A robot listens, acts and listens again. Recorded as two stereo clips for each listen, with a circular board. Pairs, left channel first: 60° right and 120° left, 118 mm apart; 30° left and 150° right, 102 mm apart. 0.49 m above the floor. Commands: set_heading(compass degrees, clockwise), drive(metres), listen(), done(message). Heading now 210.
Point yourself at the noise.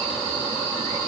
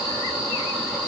listen()
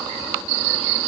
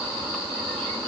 listen()
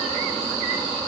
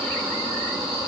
done("I can't make out anything to turn to.")